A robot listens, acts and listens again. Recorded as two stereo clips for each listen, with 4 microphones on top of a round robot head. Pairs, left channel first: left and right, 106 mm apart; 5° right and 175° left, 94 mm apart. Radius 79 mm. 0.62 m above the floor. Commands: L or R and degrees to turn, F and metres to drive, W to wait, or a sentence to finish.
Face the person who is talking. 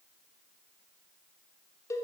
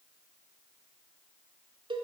W
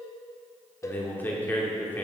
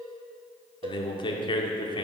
L15
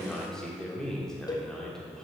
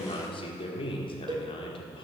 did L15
Facing the man speaking.